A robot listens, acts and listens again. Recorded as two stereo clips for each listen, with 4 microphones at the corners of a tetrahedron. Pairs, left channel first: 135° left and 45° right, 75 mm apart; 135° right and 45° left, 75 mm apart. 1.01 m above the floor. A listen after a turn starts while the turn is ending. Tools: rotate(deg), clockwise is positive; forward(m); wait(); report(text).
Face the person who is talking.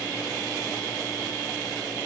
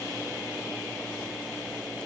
wait()
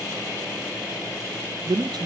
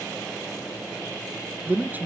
rotate(20)
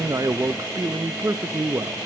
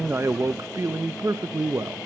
report("Found it: a man speaking, straight ahead.")